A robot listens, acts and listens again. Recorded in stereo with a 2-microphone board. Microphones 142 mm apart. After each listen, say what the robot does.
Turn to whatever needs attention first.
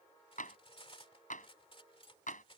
Keep listening.
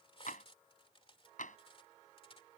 Keep listening.
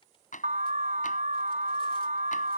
Turn 65° right.
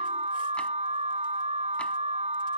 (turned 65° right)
Turn 50° right.
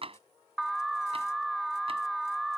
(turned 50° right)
Facing the alarm.